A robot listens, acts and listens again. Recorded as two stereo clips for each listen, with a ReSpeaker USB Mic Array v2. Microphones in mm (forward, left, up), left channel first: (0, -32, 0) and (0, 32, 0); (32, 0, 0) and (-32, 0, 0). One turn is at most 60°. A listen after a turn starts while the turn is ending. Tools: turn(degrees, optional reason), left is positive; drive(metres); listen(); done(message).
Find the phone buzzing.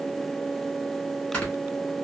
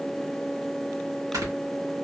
listen()
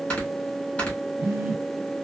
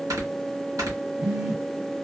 turn(degrees=60, reason="The phone buzzing: 135° left.")
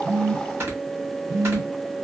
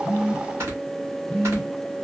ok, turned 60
turn(degrees=60, reason="The phone buzzing is now 70° left.")
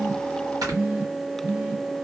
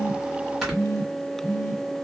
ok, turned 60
turn(degrees=25, reason="The phone buzzing is now 25° left.")
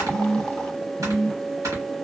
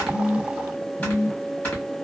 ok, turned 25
done("Found it: a phone buzzing, straight ahead.")